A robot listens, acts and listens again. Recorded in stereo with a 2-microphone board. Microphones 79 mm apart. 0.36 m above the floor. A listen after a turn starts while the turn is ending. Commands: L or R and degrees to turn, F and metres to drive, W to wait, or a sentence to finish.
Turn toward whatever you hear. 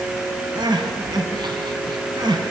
R70
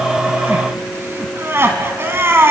R30
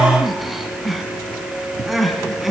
Facing the crying, 2 to 4 m away.